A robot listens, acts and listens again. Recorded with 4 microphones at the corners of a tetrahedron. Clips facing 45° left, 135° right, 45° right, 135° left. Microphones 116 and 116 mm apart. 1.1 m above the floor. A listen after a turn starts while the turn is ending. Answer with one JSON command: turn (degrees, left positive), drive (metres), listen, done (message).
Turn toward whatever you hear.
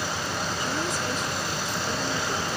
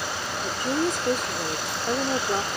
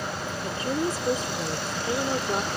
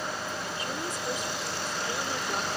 {"turn": -100}
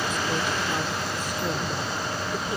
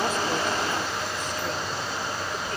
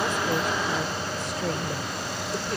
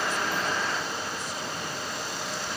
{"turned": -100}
{"listen": true}
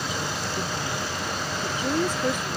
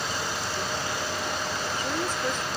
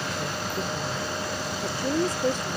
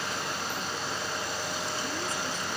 {"turn": -35}
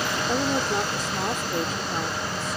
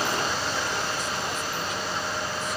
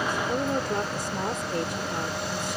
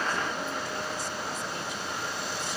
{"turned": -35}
{"turn": -10}
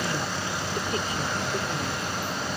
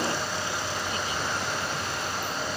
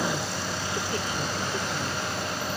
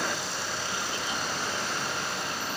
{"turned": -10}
{"listen": true}
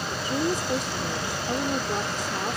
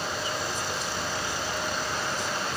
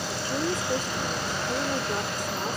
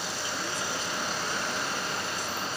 {"done": "Found it: a woman speaking, straight ahead."}